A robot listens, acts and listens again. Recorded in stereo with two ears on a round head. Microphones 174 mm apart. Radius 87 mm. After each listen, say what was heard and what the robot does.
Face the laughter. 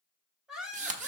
Turn 30° right.
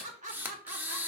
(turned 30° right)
So it is at 140° right. Turn 140° right.
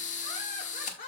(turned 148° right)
The laughter is now 45° left. Turn 45° left.
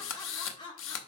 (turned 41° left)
The laughter is now 25° left. Turn 25° left.
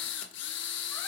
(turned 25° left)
Keep listening.
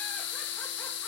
Keep listening.
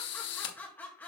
The laughter is now 10° left. Turn 10° left.
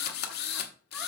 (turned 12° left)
Keep listening.
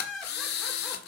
Found it: laughter, straight ahead.